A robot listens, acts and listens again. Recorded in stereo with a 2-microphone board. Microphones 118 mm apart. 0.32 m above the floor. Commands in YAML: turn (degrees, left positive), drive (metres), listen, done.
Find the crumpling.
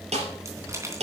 turn: -25
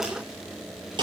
listen: true
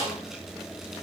listen: true
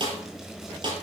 done: "I heard crumpling, but can't make it out now. It was about straight ahead or 130° right."